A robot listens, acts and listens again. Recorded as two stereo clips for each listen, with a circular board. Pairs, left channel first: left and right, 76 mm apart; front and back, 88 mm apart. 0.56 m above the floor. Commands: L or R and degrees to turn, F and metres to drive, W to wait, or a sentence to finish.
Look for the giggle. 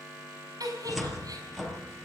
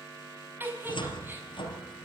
R115
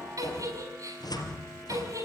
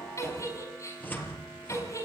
R50
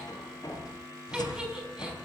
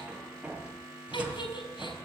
R10
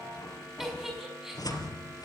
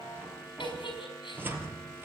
Found it: a giggle, straight ahead.